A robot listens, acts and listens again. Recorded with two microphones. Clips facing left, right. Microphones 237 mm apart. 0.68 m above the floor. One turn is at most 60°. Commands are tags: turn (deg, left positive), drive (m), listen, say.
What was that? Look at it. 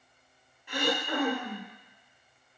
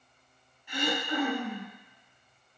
<turn deg="60"/>
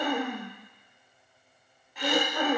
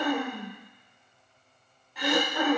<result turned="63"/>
<say>Facing the throat clearing.</say>